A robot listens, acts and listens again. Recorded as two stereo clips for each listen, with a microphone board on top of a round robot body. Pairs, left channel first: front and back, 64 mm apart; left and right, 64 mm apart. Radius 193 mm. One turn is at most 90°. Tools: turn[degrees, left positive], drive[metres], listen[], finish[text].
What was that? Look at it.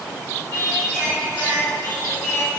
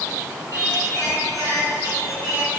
Thought: The singing: 55° right.
Action: turn[-55]
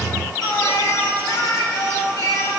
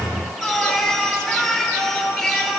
Action: finish[Found it: singing, straight ahead, over 4 m away.]